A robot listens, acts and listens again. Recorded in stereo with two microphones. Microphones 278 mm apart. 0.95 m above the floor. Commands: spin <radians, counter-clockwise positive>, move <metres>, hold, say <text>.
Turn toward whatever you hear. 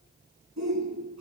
spin -1.57
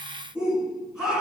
say Facing the shout.